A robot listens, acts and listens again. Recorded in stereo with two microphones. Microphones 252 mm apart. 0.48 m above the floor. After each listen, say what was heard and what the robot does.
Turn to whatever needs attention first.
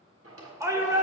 Turn 30° right.
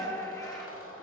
So it is at 15° left. Turn 15° left.
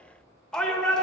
Found it: a shout, straight ahead.